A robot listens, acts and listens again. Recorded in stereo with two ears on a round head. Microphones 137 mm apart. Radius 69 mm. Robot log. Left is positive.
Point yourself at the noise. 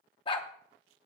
note: The dog barking: about 35° left or 145° left.
cmd yaw +35
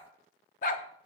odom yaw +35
note: So it is at 105° left.
cmd yaw +105
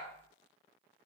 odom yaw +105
cmd idle
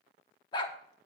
note: The dog barking is now 35° left.
cmd yaw +35
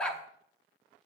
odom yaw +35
note: The dog barking is now 10° left.
cmd yaw +10
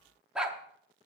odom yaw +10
end: Facing the dog barking, under 1 m away.